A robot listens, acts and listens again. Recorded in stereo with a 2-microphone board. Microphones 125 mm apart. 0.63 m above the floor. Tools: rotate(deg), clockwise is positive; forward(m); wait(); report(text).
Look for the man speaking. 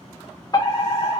wait()
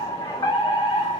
wait()
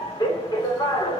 report("I can't make out a man speaking to turn to.")